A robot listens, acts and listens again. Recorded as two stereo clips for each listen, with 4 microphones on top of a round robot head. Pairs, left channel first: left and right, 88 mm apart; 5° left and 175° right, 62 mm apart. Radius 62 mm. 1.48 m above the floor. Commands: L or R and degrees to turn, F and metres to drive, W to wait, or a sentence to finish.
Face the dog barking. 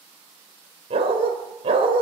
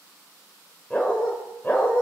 R70
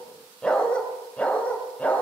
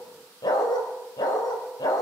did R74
L15
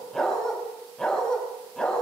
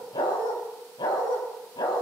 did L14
L10
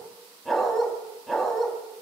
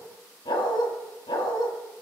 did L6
Facing the dog barking.